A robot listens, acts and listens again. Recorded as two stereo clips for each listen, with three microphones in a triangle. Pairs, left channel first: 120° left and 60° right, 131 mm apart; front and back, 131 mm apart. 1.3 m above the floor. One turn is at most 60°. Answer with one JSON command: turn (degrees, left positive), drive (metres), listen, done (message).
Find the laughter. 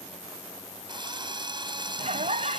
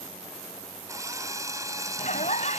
{"turn": -25}
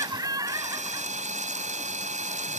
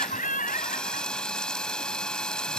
{"done": "Facing the laughter."}